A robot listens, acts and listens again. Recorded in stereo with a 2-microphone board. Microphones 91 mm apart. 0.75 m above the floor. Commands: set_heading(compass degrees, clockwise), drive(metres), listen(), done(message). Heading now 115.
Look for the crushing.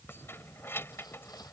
listen()
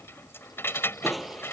set_heading(85)
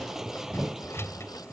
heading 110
set_heading(140)
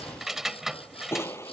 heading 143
set_heading(118)
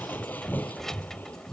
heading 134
set_heading(114)
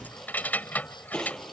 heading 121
done("Found it: crushing, straight ahead.")